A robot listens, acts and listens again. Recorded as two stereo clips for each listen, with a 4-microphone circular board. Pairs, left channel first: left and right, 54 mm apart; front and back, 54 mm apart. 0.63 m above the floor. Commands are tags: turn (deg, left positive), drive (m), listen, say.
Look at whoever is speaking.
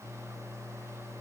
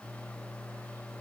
<listen/>
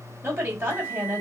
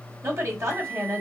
<turn deg="-140"/>
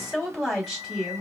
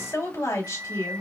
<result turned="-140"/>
<say>Found it: a woman speaking, straight ahead.</say>